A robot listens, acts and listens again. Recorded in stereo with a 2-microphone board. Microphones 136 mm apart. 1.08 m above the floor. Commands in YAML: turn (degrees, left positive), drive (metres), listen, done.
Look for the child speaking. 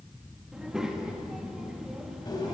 turn: -30
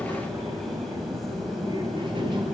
turn: -145
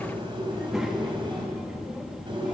done: "Found it: a child speaking, straight ahead, 1 to 2 m away."